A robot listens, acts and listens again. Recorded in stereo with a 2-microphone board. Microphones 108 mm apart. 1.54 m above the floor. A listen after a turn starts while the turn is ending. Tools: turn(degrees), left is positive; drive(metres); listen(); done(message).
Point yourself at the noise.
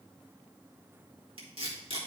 turn(degrees=-60)
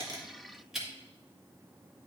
done("Facing the tape being pulled.")